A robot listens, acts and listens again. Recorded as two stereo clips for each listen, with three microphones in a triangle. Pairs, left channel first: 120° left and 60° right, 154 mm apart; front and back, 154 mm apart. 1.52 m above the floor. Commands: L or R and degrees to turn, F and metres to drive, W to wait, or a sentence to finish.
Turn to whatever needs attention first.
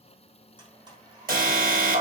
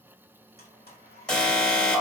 R85
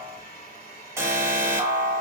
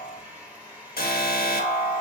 L10
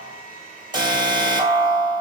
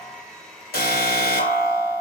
Facing the alarm, 1 to 2 m away.